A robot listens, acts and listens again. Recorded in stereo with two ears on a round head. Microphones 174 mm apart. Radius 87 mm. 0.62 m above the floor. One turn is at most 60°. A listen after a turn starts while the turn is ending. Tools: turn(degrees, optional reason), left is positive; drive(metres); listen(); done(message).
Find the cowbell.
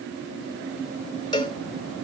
turn(degrees=25, reason="The cowbell: about 25° left or 155° left.")
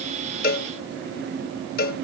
turn(degrees=60, reason="So it is at 130° left.")
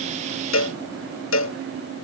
turn(degrees=60, reason="The cowbell is now 70° left.")
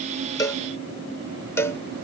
turn(degrees=15, reason="The cowbell is now 15° left.")
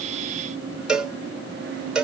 done("Found it: a cowbell, straight ahead.")